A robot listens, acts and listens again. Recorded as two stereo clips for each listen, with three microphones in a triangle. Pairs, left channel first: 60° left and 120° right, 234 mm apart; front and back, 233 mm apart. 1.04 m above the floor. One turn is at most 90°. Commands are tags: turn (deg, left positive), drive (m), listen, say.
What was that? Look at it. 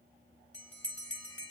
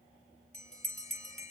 <turn deg="60"/>
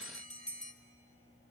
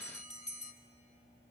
<say>Facing the bell, 1 to 2 m away.</say>